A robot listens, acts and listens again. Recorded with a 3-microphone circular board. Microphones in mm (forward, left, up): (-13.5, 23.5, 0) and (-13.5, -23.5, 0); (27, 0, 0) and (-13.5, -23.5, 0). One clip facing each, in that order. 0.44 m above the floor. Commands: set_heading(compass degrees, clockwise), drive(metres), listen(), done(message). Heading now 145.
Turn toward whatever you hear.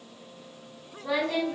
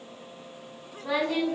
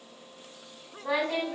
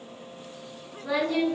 set_heading(160)
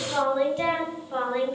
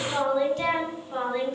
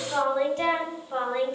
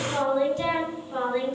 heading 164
set_heading(144)
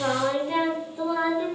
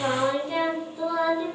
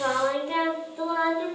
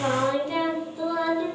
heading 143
set_heading(73)
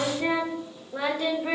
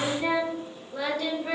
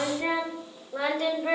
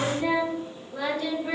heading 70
set_heading(20)
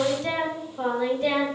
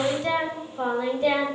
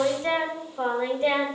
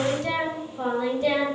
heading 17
done("Facing the singing.")